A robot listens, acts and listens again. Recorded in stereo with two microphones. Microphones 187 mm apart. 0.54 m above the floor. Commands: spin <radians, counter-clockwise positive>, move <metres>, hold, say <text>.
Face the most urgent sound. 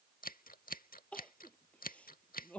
spin 0.52
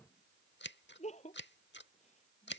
spin 2.44
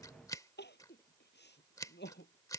spin 1.13
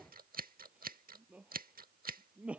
say Facing the crying.